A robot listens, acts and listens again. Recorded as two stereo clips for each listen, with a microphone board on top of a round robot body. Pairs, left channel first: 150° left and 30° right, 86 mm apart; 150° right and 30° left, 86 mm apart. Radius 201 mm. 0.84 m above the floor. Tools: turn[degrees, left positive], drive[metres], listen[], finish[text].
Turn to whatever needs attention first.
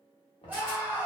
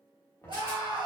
Thought: The scream: 40° left.
Action: turn[40]
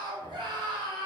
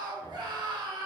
Action: finish[Facing the scream.]